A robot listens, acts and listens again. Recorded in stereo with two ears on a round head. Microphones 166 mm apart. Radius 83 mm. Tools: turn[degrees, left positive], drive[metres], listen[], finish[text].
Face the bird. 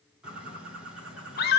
Action: turn[-30]
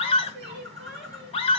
Thought: So it is at 145° right.
Action: turn[-145]
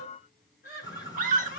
Thought: The bird is now 20° left.
Action: turn[20]
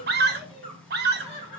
Action: finish[Facing the bird, 2 to 4 m away.]